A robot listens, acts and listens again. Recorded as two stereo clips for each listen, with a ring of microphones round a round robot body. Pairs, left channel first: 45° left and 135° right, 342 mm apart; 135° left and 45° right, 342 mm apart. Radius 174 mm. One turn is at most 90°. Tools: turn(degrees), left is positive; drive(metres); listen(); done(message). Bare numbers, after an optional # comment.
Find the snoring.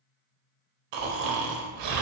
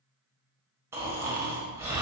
# The snoring: 130° right.
turn(-90)
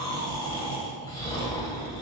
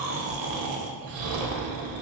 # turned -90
# The snoring is now 35° right.
turn(-35)
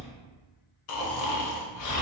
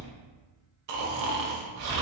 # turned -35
done("Found it: snoring, straight ahead.")